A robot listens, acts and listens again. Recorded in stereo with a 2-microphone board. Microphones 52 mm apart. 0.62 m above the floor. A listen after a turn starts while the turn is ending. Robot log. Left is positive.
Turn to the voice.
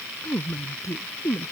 cmd yaw +90
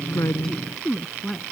end: Found it: a woman speaking, straight ahead.